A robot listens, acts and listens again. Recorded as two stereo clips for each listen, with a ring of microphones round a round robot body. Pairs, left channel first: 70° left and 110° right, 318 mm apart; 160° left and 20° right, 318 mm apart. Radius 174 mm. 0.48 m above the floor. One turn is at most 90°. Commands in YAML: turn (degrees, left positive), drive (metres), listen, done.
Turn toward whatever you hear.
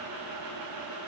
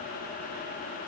listen: true
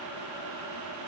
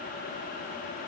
listen: true
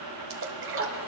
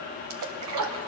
turn: -60
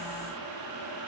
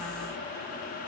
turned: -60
done: "Facing where the splash came from. I can't hear it now."